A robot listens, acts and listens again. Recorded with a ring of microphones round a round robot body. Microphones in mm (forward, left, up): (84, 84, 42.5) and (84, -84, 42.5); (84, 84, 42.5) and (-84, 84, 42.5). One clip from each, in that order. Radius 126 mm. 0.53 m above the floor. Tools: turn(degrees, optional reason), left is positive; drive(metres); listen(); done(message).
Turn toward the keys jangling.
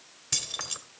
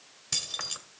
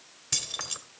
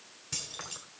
done("Facing the keys jangling.")